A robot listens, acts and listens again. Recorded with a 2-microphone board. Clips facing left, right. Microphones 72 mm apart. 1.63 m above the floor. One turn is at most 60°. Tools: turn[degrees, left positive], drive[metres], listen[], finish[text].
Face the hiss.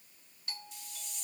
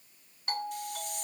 Thought: The hiss: about 60° right or 120° right.
Action: turn[-60]
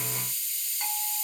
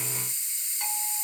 Thought: So it is at 30° right.
Action: turn[-30]
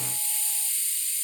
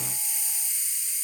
Thought: The hiss is now 20° right.
Action: turn[-20]
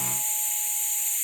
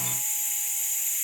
Action: finish[Facing the hiss.]